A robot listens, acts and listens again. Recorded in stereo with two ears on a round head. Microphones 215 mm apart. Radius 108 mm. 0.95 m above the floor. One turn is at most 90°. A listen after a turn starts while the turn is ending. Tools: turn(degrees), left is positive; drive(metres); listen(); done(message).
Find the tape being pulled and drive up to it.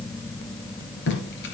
turn(degrees=50)
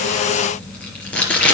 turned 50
drive(metres=1.0)
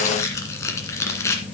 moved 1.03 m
turn(degrees=15)
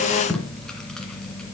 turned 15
drive(metres=1.0)
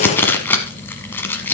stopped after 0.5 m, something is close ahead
turn(degrees=10)
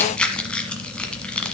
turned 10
done("I am next to the tape being pulled.")